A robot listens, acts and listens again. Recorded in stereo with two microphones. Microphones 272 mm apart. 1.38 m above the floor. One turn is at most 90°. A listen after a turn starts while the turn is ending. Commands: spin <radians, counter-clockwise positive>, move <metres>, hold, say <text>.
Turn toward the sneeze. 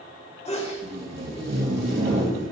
spin 0.44
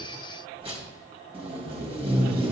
hold
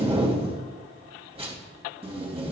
say I heard a sneeze, but can't make it out now. It was about straight ahead or 130° left.